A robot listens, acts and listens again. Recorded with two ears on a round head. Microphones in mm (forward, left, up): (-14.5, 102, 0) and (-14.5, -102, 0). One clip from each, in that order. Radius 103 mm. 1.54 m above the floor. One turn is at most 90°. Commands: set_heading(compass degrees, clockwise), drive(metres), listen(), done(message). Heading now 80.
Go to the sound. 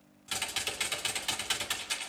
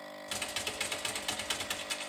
set_heading(50)
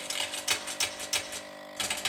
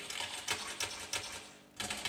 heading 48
set_heading(318)
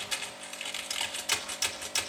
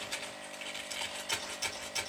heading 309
set_heading(264)
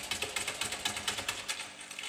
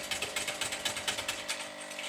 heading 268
drive(1.0)
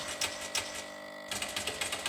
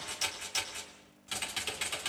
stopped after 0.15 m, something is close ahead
done("Something is in my way. I am facing the typing on a keyboard but have not reached it.")